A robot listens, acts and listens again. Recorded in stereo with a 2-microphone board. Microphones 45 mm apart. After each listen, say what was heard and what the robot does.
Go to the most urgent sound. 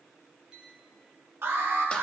The alarm: about 60° right or 120° right. Turn 60° right.
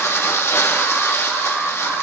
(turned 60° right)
So it is at 60° right. Turn 60° right.
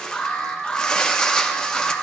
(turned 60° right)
The alarm is now 20° left. Turn 20° left.
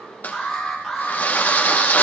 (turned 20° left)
Drive 1.0 m forward.
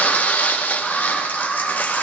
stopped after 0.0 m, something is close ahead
Something is in my way. I am facing the alarm but have not reached it.